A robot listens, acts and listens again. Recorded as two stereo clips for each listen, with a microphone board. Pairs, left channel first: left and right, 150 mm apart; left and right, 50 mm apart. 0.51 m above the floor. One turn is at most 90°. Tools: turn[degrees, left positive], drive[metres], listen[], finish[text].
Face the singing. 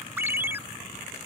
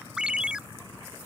Action: listen[]
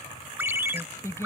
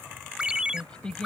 Thought: The singing: about 20° left or 160° left.
Action: turn[20]
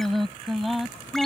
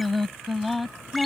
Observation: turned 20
Action: turn[30]
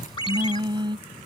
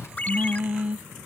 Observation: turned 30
Thought: So it is at 30° right.
Action: turn[-30]
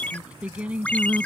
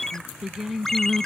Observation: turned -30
Thought: The singing is now 10° right.
Action: turn[-10]
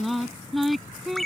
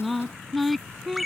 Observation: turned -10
Action: finish[Facing the singing.]